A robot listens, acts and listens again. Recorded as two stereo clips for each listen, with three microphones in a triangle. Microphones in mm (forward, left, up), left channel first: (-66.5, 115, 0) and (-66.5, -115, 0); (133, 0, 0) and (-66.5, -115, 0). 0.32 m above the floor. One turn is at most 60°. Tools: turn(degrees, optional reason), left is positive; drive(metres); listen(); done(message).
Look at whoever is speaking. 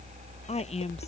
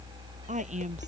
turn(degrees=60, reason="The woman speaking: 150° left.")
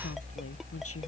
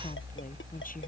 turn(degrees=60, reason="Nothing new. It was at 90° left.")
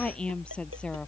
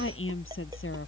done("Found it: a woman speaking, straight ahead.")